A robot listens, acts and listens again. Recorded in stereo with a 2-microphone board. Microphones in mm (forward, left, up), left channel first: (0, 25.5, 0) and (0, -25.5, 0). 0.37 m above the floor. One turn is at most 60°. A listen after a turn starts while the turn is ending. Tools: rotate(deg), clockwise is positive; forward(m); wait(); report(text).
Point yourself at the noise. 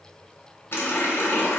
rotate(-55)
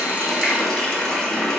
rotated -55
rotate(-15)
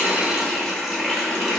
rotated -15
report("Facing the running tap, 1 to 2 m away.")